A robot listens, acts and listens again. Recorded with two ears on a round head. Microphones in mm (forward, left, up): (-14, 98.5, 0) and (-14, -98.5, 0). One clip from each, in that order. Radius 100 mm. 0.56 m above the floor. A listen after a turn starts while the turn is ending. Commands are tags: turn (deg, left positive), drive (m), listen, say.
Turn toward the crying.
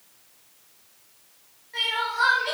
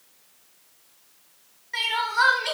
<turn deg="-90"/>
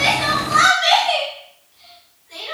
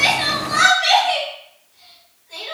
<say>Facing the crying, under 1 m away.</say>